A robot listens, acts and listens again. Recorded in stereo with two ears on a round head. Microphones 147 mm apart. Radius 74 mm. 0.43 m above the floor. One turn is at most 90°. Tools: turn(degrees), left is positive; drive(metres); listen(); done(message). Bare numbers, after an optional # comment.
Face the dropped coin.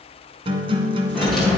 turn(30)
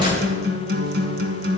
# So it is at 30° right.
turn(-30)
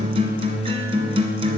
done("I heard a dropped coin from this way, but can't make it out now.")